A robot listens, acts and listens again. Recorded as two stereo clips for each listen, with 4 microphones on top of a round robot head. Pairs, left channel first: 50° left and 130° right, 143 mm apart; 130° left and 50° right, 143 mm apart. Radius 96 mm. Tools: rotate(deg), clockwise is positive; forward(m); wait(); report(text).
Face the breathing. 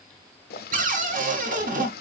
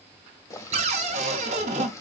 wait()
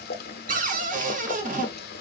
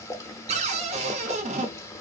wait()
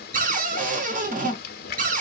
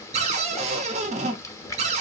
report("I can't make out breathing to turn to.")